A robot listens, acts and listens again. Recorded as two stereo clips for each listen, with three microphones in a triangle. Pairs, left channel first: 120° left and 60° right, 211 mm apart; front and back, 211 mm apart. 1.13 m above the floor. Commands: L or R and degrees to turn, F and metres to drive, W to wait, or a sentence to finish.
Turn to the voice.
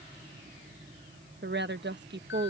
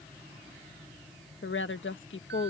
R25
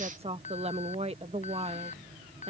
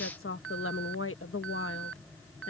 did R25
Facing the woman speaking.